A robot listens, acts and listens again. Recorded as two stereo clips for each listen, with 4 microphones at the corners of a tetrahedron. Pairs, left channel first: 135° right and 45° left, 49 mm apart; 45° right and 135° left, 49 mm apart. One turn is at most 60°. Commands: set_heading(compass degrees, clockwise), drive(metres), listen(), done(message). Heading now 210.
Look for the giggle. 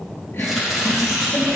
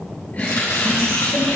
set_heading(270)
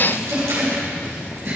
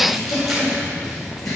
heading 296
set_heading(306)
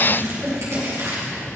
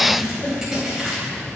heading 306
done("Found it: a giggle, straight ahead, 2 to 4 m away.")